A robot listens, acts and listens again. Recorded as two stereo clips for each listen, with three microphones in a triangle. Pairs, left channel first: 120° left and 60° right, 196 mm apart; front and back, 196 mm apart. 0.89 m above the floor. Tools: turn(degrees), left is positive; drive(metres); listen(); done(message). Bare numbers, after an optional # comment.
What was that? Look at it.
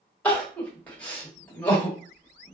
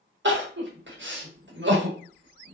# The crying: 160° right.
turn(-160)
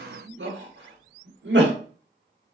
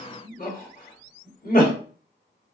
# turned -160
# The crying is now 45° right.
turn(-45)
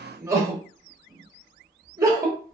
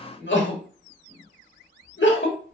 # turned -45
# The crying is now 15° left.
turn(15)
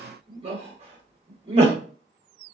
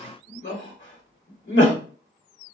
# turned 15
done("Facing the crying, under 1 m away.")